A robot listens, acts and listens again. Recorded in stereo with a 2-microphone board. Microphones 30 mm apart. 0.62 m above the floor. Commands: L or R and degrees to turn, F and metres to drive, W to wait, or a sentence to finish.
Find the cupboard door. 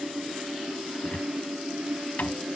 L65
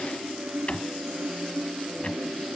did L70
L45
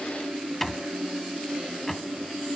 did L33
L10
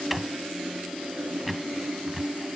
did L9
Found it: a cupboard door, straight ahead.